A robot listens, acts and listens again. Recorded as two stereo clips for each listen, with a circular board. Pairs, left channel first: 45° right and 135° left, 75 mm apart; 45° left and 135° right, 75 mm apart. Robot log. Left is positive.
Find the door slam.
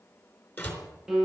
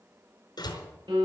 note: The door slam: 20° left.
cmd yaw +20
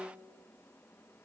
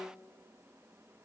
end: Facing where the door slam came from. I can't hear it now.